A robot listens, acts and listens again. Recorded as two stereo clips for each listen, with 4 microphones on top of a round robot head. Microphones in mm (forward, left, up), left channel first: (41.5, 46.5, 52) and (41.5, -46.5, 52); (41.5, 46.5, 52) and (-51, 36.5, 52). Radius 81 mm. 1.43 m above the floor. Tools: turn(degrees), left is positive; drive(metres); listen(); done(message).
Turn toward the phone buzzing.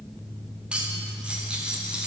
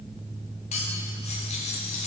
listen()
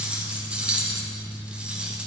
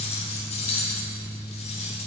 listen()
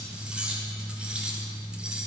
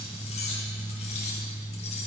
done("I can't make out a phone buzzing to turn to.")